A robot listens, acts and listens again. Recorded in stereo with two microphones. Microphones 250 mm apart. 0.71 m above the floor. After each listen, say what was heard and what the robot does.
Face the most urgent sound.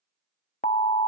The alarm: about 30° left or 150° left. Turn 30° left.
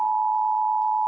Found it: an alarm, straight ahead.